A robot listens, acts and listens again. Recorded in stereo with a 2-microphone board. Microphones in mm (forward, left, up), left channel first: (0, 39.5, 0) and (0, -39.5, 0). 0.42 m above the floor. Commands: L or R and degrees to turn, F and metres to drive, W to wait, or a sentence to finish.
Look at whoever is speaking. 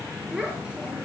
R30
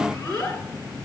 L20
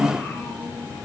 W
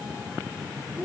Found it: a child speaking, straight ahead.